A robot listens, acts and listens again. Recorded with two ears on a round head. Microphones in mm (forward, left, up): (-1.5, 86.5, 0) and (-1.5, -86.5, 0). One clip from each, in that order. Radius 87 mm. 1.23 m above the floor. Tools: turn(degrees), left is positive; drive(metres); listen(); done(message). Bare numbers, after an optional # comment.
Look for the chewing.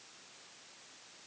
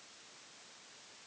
listen()
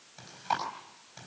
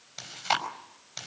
# The chewing: about 70° right or 110° right.
turn(-70)
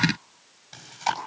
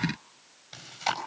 done("Found it: chewing, straight ahead, over 4 m away.")